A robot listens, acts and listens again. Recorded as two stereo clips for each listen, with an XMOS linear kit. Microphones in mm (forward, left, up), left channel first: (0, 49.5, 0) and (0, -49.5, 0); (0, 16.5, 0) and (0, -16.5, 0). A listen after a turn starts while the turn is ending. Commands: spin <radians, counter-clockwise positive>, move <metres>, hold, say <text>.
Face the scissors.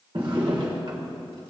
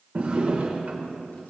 hold
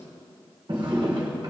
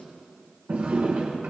hold
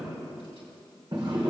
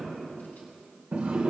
say I can't make out scissors, only a drawer.